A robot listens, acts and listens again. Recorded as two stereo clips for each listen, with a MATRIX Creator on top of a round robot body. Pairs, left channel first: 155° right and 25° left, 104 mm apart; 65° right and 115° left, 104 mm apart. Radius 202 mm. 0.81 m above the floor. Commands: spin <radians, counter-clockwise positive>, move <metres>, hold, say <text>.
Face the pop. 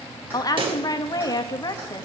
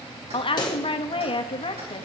spin -0.35
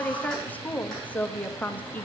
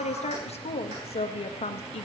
say I heard a pop from this way, but can't make it out now.